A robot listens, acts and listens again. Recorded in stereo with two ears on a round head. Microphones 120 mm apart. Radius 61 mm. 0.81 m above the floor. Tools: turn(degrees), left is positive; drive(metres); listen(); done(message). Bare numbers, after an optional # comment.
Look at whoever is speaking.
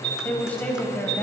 turn(30)
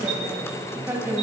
# So it is at 15° right.
turn(-15)
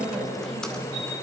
done("Found it: a woman speaking, straight ahead.")